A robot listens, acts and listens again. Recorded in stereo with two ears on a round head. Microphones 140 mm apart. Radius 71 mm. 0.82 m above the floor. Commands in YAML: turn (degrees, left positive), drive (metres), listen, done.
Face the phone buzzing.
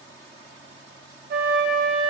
listen: true
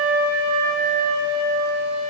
listen: true
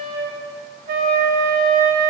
done: "I can't make out a phone buzzing, only a flute."